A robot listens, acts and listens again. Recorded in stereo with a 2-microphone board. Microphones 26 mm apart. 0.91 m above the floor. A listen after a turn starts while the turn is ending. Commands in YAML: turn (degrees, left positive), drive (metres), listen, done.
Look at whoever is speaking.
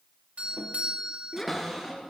turn: 25
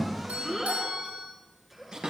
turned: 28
done: "Found it: a child speaking, straight ahead."